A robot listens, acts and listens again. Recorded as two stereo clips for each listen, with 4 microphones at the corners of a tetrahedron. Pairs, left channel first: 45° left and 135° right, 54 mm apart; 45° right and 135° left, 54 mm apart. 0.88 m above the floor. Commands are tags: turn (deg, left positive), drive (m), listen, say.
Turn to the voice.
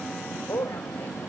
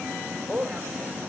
<turn deg="70"/>
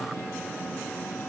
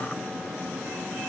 <listen/>
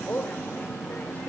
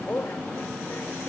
<say>Facing the woman speaking, over 4 m away.</say>